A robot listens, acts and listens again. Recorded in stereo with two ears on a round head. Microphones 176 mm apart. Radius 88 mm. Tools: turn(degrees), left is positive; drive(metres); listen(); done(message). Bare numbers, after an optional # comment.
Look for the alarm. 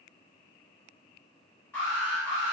turn(30)
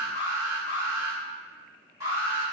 # So it is at 20° right.
turn(-20)
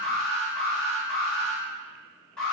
done("Facing the alarm.")